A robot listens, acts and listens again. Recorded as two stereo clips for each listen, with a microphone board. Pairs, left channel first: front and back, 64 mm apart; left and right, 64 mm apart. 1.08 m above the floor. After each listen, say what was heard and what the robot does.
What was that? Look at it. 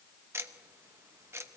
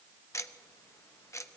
The ticking: 130° left. Turn 130° left.
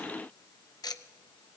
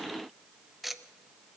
Found it: ticking, straight ahead.